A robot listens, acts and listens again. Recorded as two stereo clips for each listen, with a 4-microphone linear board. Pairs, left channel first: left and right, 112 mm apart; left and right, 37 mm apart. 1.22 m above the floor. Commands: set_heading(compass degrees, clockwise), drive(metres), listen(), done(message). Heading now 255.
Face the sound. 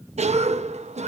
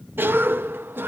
set_heading(345)
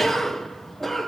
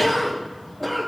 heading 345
done("Facing the cough, 1 to 2 m away.")